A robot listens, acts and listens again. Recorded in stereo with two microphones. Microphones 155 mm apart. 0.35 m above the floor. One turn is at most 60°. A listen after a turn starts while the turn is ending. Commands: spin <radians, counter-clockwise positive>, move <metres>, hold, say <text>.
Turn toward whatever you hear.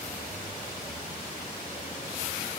hold
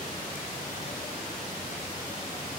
hold
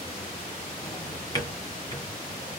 spin 0.44
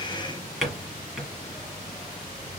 say Facing the drawer.